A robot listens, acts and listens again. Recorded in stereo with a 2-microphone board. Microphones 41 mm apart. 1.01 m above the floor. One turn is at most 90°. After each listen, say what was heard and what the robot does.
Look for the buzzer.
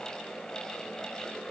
Keep listening.
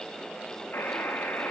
The buzzer: about 65° left or 115° left. Turn 65° left.
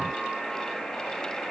Found it: a buzzer, straight ahead.